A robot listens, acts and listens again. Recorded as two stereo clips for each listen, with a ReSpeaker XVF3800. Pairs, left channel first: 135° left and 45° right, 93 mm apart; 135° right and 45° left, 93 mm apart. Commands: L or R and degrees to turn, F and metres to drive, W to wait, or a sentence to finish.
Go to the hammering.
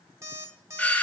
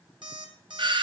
W
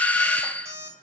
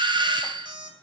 W
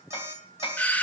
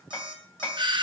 L160
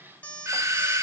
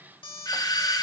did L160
W
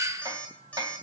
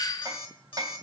F1.0
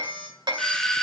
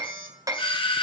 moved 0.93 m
F1.0
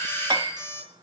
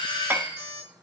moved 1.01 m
R20
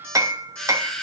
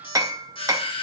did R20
F1.0
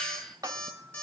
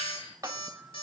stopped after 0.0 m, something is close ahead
I am next to the hammering.